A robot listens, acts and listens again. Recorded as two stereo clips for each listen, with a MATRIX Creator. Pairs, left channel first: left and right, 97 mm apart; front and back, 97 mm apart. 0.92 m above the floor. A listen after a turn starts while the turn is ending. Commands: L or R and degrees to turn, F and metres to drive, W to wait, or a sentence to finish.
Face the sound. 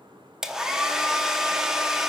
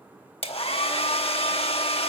Facing the hair dryer, under 1 m away.